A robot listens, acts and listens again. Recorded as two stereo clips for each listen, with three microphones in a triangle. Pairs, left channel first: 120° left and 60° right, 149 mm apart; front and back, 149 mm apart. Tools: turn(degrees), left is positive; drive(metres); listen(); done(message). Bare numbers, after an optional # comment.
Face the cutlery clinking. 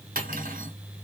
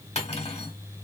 # The cutlery clinking: 45° right.
turn(-45)
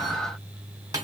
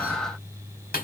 done("Found it: cutlery clinking, straight ahead.")